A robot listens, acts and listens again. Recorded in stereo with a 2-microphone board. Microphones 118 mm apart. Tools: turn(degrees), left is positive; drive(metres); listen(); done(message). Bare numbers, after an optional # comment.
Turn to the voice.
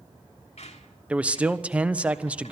turn(-30)
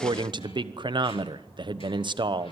# So it is at 140° right.
turn(-140)
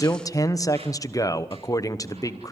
# The man speaking is now 30° left.
turn(30)
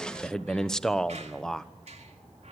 done("Facing the man speaking, 1 to 2 m away.")